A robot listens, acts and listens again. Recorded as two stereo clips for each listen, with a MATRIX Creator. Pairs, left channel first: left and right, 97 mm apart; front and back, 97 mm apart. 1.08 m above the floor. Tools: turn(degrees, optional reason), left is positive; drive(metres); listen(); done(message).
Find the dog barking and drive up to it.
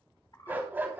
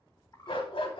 turn(degrees=-20, reason="The dog barking: 20° right.")
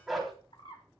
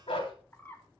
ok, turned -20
drive(metres=1.0)
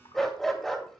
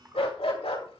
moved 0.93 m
drive(metres=1.0)
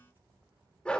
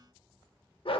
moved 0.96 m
turn(degrees=10, reason="The dog barking is now 10° left.")
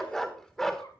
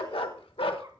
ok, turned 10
drive(metres=1.0)
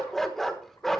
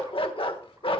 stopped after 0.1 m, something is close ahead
done("Arrived at the dog barking, straight ahead.")